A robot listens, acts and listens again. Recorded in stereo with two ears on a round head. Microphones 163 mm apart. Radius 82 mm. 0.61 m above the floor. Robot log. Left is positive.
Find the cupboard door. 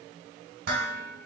cmd idle
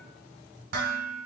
cmd idle
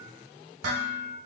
end: I can't make out a cupboard door, only dishes clattering.